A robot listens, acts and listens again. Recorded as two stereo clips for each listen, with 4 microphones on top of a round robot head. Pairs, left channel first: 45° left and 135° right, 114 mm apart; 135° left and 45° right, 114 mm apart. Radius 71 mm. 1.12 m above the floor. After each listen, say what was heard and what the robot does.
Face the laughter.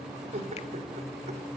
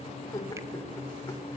The laughter: 165° right. Turn 165° right.
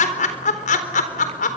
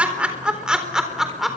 The laughter is now 40° left. Turn 40° left.
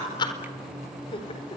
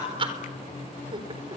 Facing the laughter.